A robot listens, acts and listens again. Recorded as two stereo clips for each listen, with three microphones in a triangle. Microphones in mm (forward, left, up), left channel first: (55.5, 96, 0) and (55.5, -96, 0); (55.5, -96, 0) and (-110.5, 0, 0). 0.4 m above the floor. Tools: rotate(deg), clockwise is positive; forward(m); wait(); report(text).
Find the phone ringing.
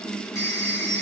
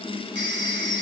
rotate(-165)
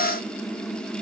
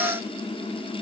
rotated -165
wait()
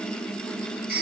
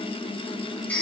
rotate(-50)
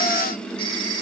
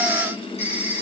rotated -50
rotate(-25)
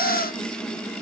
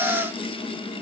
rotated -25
wait()
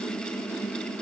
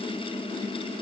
wait()
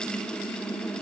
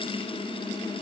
report("I heard a phone ringing from this way, but can't make it out now.")